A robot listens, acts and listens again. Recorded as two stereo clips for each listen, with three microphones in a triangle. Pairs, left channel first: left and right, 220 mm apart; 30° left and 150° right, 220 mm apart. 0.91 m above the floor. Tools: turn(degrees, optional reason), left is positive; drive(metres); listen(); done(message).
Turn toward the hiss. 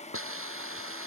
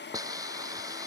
turn(degrees=-75, reason="The hiss: 75° right.")
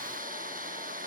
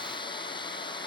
turn(degrees=-40, reason="The hiss is now 40° right.")
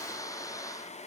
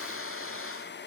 turn(degrees=15, reason="The hiss is now 15° left.")
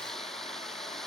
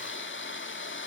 done("Facing the hiss.")